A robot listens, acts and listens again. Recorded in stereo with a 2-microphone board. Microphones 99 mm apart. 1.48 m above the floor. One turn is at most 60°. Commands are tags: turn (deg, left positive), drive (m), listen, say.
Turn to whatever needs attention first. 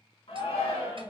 <turn deg="60"/>
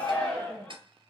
<turn deg="10"/>
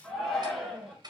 <say>Facing the shout.</say>